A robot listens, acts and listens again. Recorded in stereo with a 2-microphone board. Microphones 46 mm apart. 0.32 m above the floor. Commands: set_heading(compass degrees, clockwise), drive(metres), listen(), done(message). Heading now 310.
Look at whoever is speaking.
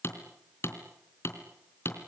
listen()
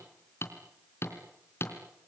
listen()
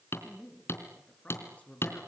set_heading(280)
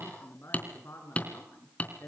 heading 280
set_heading(160)
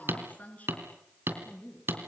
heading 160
set_heading(125)
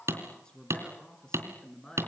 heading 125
set_heading(110)
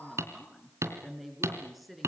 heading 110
done("Found it: a woman speaking, straight ahead, over 4 m away.")